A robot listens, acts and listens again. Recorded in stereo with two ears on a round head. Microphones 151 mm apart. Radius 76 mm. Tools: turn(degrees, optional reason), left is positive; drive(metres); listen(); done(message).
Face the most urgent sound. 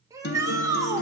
turn(degrees=-20, reason="The shout: about 20° right or 160° right.")
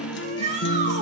turn(degrees=-135, reason="So it is at 135° right.")
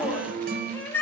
turn(degrees=15, reason="The shout is now 15° left.")
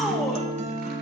listen()
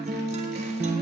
listen()
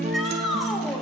done("Found it: a shout, straight ahead, 2 to 4 m away.")